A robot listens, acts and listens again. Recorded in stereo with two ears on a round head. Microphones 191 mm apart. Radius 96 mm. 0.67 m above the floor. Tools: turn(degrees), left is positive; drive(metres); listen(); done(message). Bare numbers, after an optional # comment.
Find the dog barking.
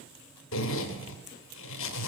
listen()
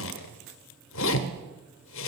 listen()
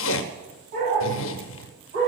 # The dog barking: about 35° right or 145° right.
turn(-35)
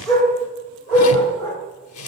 done("Found it: a dog barking, straight ahead, over 4 m away.")